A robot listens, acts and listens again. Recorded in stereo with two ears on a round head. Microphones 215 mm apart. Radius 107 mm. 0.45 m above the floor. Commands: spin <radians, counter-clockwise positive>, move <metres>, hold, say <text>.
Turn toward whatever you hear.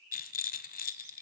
spin 0.70
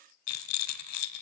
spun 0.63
spin 1.83
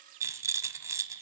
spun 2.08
spin -0.26
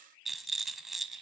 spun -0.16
say Facing the rattle, 1 to 2 m away.